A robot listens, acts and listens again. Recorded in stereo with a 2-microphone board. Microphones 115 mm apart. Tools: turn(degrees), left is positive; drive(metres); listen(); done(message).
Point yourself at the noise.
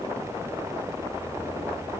listen()
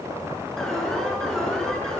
turn(degrees=30)
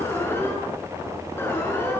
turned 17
turn(degrees=160)
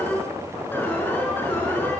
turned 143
turn(degrees=20)
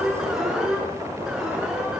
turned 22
done("Facing the alarm.")